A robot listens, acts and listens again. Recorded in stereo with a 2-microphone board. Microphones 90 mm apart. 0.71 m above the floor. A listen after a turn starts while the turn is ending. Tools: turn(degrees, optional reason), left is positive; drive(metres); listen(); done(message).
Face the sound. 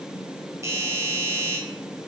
turn(degrees=-35, reason="The doorbell: about 35° right or 145° right.")
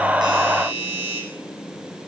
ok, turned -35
turn(degrees=-110, reason="So it is at 110° right.")
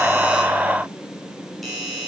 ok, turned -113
done("Found it: a doorbell, straight ahead, over 4 m away.")